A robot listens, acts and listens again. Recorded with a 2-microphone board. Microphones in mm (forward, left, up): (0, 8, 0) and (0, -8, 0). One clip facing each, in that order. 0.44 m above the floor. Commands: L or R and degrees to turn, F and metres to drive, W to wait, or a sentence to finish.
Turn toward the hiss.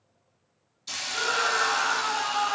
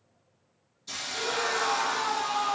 L35
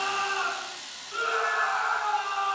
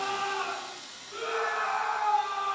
L110
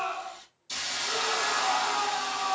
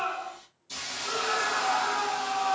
L35
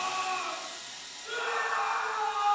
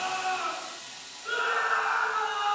Facing the hiss.